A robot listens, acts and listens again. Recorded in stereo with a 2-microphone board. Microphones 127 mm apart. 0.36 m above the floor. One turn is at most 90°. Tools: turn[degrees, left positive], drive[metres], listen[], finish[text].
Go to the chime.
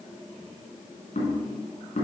Action: listen[]
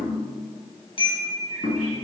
Thought: The chime: about 45° left or 135° left.
Action: turn[45]
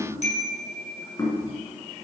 Thought: So it is at 85° left.
Action: turn[85]
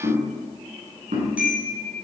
Thought: The chime is now 15° right.
Action: turn[-15]
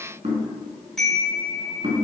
Action: drive[1.0]
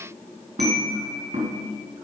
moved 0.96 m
Action: drive[1.0]
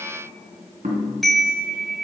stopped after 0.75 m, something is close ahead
Action: finish[Arrived at the chime, straight ahead.]